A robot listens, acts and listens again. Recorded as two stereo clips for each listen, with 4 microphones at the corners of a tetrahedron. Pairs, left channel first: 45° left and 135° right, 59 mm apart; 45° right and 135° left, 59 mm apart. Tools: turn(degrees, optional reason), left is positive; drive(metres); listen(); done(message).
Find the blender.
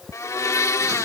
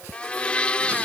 turn(degrees=25, reason="The blender: 25° left.")
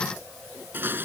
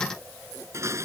listen()
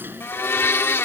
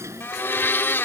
done("Facing the blender.")